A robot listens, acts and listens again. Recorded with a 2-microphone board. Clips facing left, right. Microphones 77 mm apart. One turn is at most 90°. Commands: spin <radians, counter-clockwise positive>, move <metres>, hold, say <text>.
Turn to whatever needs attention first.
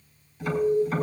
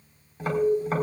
spin -1.57
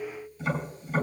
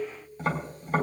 hold
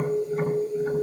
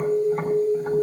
say Found it: an alarm, straight ahead.